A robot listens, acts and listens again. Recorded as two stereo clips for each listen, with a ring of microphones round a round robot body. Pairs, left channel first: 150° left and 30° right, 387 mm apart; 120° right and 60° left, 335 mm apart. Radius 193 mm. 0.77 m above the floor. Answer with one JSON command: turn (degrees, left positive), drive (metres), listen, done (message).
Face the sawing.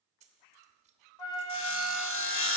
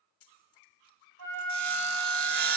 {"turn": 90}
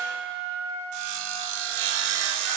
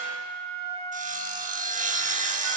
{"turn": -10}
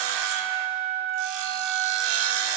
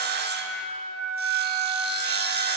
{"done": "Facing the sawing."}